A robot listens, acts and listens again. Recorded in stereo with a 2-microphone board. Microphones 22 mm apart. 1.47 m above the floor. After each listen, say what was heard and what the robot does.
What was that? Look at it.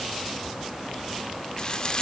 The frying: about 35° left or 145° left. Turn 35° left.
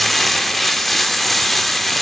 So it is at 10° left. Turn 10° left.
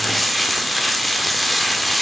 Facing the frying, 1 to 2 m away.